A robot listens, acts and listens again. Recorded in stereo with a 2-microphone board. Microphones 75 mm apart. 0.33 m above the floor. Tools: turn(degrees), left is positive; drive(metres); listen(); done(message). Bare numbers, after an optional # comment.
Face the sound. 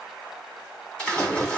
turn(30)
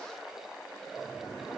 listen()
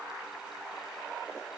done("I heard a splash, but can't make it out now. It was about 20° right or 140° left.")